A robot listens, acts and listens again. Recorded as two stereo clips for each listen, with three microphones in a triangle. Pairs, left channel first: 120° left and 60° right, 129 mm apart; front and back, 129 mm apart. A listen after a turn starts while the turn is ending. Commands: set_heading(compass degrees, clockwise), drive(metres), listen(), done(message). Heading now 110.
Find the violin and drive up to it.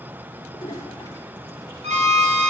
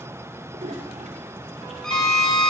set_heading(195)
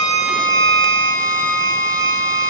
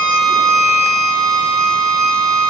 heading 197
drive(1.0)
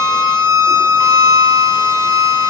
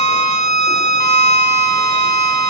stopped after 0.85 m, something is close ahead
done("I am next to the violin.")